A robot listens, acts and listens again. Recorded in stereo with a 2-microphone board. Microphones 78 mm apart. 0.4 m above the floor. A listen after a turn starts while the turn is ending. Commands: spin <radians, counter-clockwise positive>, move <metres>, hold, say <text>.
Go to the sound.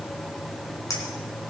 spin 0.79
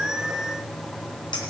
hold
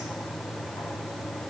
hold
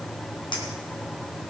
say I heard a clink, but can't make it out now. It was about straight ahead or 90° left. I did not reach it.